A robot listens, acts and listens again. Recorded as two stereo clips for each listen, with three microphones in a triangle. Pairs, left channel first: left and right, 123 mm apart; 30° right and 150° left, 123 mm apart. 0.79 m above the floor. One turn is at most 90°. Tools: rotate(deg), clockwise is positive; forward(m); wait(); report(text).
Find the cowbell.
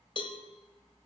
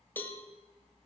rotate(-45)
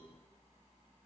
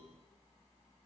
wait()
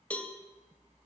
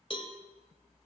rotate(-10)
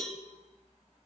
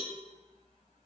report("Facing the cowbell, 1 to 2 m away.")